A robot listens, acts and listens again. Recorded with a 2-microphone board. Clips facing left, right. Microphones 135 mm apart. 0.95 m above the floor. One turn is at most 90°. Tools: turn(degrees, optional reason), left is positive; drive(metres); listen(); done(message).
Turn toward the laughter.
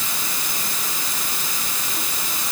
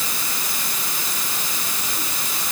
listen()
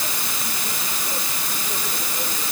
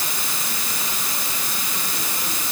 listen()
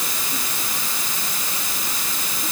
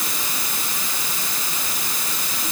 done("I can't make out laughter to turn to.")